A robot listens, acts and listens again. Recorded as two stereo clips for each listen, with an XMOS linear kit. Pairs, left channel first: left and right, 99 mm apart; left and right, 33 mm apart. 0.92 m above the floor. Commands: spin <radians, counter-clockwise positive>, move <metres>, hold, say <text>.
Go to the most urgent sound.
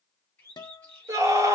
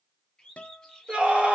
spin -0.52
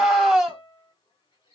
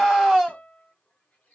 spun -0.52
move 1.0
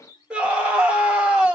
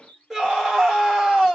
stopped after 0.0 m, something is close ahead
spin -0.17
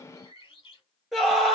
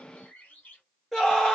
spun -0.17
say Blocked. The scream is further on, straight ahead.